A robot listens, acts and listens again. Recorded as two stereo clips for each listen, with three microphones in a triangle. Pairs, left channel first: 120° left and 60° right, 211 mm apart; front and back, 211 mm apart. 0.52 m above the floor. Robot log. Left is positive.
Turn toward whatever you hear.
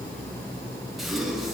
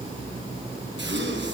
note: The gasp: 150° right.
cmd yaw -150
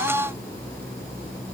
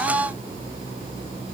end: Facing where the gasp came from. I can't hear it now.